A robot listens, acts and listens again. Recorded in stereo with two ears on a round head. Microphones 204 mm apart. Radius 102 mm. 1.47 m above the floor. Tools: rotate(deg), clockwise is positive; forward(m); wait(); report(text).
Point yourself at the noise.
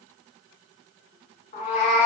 rotate(-30)
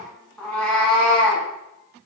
report("Facing the cat meowing, 1 to 2 m away.")